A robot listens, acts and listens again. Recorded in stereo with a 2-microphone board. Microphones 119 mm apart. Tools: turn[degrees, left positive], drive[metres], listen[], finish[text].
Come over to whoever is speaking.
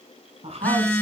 Thought: The woman speaking: about 65° right or 115° right.
Action: turn[-65]
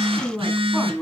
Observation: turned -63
Action: drive[1.0]
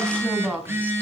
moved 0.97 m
Thought: The woman speaking is now 15° right.
Action: turn[-15]
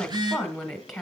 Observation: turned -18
Action: drive[1.0]
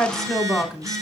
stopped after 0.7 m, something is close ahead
Action: finish[Arrived at the woman speaking, straight ahead.]